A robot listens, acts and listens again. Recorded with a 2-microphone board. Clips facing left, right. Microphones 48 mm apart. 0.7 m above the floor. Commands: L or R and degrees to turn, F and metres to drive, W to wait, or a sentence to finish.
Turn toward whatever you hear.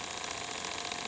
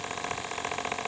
W
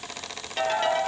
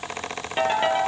R20
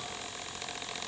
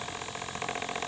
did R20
W
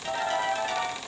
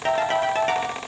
R135
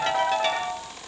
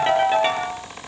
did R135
R25
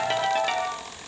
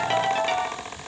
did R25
Found it: a ringtone, straight ahead, over 4 m away.